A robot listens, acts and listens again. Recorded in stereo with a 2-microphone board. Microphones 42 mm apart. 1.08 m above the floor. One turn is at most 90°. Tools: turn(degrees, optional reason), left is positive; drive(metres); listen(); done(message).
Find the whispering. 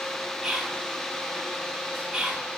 turn(degrees=-20, reason="The whispering: about 20° right or 160° right.")
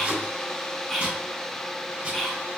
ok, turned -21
done("Found it: whispering, straight ahead, 1 to 2 m away.")